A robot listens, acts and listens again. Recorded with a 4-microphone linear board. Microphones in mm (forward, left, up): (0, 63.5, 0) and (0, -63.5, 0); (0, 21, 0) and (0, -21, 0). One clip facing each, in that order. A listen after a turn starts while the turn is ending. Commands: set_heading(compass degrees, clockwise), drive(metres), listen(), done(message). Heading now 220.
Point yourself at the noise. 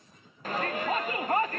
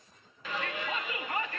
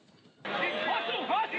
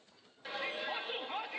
set_heading(175)
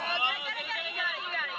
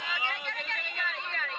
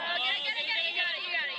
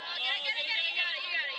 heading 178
done("Facing the shout, under 1 m away.")